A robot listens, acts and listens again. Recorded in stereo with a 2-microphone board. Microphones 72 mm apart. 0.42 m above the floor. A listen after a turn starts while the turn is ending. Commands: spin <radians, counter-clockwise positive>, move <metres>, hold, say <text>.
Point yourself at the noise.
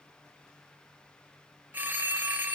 spin -0.44
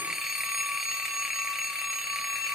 say Facing the phone ringing, 1 to 2 m away.